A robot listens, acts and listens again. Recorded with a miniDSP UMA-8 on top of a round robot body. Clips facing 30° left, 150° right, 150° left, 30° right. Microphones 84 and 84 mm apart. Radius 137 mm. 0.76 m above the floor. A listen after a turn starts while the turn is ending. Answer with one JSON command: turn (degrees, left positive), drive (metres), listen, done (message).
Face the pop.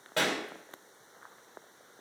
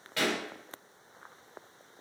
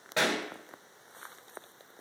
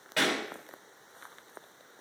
{"turn": 85}
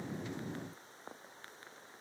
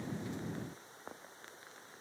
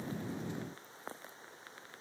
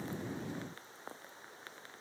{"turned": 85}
{"done": "Facing where the pop came from. I can't hear it now."}